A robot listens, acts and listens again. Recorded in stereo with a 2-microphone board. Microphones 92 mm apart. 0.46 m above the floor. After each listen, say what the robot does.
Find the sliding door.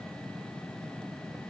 Keep listening.
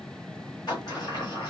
Turn 50° left.
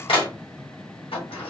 Turn 80° left.
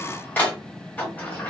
Turn 20° left.
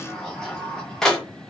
Facing the sliding door, 1 to 2 m away.